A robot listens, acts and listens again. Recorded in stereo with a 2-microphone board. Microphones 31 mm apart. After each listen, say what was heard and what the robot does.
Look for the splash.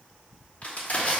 Keep listening.
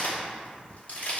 Keep listening.
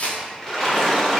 Turn 30° left.
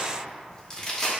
Keep listening.
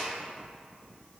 I heard a splash, but can't make it out now. It was about 15° right or 135° left.